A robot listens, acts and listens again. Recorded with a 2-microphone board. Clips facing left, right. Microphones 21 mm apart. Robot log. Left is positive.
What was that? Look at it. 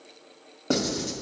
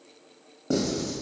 note: The writing: about 40° left or 140° left.
cmd yaw +40
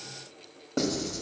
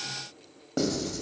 end: Facing the writing.